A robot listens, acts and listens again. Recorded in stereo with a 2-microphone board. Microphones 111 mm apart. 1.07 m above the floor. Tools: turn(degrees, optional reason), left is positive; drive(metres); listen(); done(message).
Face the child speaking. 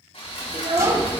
turn(degrees=-65, reason="The child speaking: about 65° right or 115° right.")
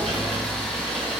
listen()
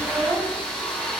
turn(degrees=-30, reason="So it is at 30° right.")
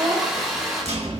turn(degrees=-30, reason="The child speaking is now 30° right.")
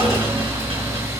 listen()
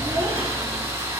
listen()
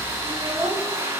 turn(degrees=-30, reason="The child speaking is now 30° right.")
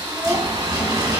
turn(degrees=-15, reason="The child speaking is now 15° right.")
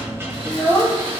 done("Facing the child speaking.")